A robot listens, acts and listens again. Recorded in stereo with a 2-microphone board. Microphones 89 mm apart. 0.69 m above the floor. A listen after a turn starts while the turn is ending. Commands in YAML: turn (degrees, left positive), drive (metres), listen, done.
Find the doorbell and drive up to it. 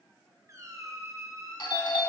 turn: 60
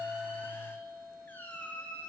turn: 50
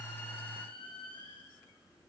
listen: true
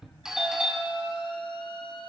drive: 1.0
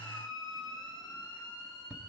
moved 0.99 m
turn: -10
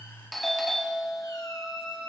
drive: 1.0
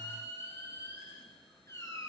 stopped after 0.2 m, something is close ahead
listen: true
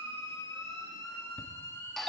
done: "I am next to the doorbell."